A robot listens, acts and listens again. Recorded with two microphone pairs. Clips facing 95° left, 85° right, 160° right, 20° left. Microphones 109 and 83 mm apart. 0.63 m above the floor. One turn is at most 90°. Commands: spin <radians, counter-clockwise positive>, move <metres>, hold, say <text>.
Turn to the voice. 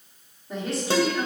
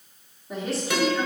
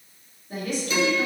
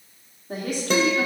spin 0.17
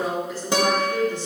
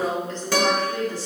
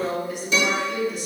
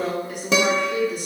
spin 0.61
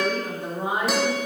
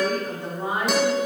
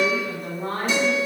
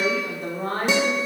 spin 0.61
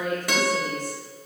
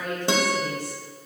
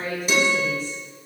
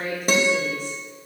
spin 0.44
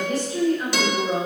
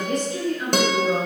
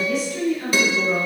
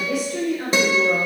spin 0.17
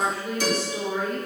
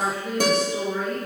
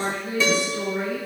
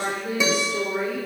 say Found it: a woman speaking, straight ahead, 2 to 4 m away.